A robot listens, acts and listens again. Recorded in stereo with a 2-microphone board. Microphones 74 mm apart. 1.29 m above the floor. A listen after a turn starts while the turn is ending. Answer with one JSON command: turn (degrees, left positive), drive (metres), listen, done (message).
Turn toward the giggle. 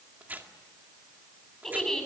{"turn": 30}
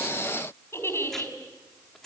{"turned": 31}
{"turn": 145}
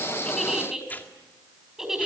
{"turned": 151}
{"done": "Facing the giggle, 2 to 4 m away."}